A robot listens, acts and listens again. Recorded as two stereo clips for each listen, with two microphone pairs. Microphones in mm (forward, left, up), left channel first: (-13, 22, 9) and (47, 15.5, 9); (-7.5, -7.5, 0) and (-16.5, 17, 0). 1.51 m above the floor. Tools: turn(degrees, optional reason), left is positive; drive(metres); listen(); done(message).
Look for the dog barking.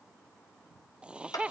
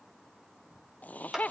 listen()
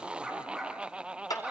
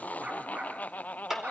turn(degrees=80, reason="The dog barking: 80° left.")
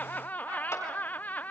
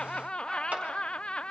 listen()
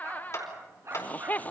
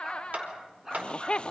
turn(degrees=30, reason="The dog barking is now 30° left.")
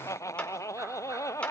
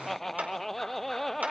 listen()
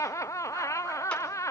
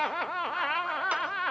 listen()
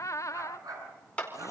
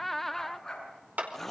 done("Facing the dog barking.")